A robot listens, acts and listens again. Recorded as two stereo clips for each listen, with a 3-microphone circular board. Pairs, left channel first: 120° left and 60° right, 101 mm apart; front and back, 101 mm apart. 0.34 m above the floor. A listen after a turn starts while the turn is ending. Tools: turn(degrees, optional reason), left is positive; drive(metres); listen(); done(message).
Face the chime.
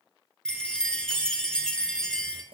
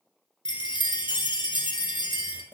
turn(degrees=35, reason="The chime: 35° left.")
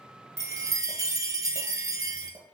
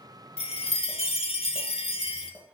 done("Facing the chime.")